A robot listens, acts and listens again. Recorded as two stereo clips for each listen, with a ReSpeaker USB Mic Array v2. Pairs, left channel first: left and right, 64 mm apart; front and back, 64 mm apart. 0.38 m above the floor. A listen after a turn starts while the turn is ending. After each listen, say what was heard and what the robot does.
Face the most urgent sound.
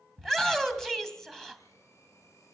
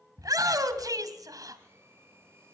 The shout: 175° left. Turn 175° left.
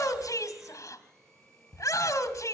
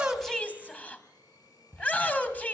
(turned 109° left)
The shout is now 65° left. Turn 65° left.
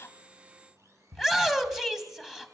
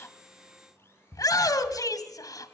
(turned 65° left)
Found it: a shout, straight ahead, 2 to 4 m away.